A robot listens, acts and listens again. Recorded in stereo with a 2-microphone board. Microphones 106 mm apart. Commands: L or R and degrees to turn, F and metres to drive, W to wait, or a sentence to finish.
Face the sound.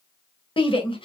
L55
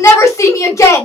L35
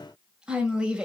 R10
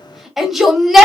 Found it: a shout, straight ahead.